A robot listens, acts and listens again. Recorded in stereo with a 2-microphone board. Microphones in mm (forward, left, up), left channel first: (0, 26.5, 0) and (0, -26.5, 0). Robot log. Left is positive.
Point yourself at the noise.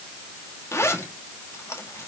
note: The zipper: about 60° left or 120° left.
cmd yaw +60
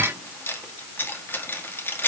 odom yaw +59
note: So it is at 50° left.
cmd yaw +50
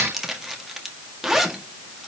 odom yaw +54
end: Found it: a zipper, straight ahead.